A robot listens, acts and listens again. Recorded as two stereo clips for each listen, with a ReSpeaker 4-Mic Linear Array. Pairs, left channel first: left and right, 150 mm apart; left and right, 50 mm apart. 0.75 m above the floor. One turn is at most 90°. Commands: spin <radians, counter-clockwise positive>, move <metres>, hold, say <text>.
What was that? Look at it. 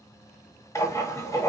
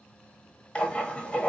spin 0.35
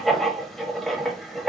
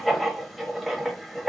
say Facing the writing.